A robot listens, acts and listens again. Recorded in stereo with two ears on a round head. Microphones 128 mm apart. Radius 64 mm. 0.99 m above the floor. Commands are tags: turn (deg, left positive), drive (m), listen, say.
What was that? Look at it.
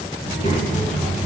<turn deg="55"/>
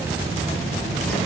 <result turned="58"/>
<say>Facing the child speaking.</say>